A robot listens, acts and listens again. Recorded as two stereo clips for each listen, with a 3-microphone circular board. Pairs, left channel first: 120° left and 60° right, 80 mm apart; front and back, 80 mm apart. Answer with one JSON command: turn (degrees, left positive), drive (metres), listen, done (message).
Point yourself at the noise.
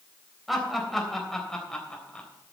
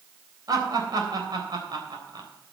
{"turn": -160}
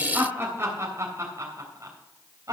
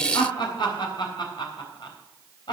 {"turn": -15}
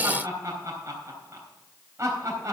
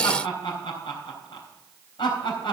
{"done": "Found it: laughter, straight ahead."}